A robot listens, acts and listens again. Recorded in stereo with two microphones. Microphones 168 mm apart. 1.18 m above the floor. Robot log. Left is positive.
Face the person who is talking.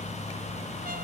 cmd idle
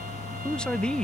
cmd yaw +30
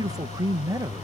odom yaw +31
note: So it is at 25° right.
cmd yaw -25
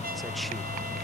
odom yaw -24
cmd idle
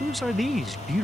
end: Facing the man speaking.